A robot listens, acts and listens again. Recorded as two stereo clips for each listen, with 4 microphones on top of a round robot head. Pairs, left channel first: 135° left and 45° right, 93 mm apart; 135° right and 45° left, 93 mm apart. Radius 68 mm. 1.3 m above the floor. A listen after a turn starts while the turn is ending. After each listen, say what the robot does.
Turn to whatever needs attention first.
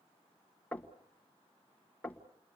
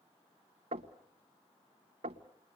Keep listening.
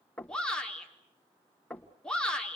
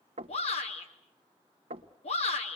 Turn 145° right.
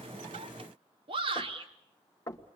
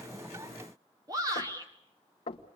Turn 10° right.
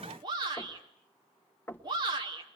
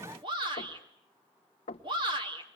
Found it: a shout, straight ahead, over 4 m away.